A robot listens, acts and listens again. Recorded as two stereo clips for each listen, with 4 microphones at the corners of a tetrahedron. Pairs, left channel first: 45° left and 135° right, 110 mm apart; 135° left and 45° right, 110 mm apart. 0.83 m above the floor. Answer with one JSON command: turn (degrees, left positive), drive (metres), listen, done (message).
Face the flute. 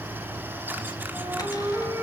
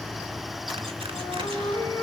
{"turn": 165}
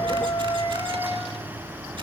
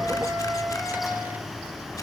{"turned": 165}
{"turn": 60}
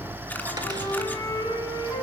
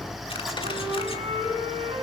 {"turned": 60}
{"turn": -15}
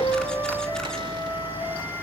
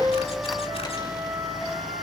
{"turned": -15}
{"done": "Found it: a flute, straight ahead."}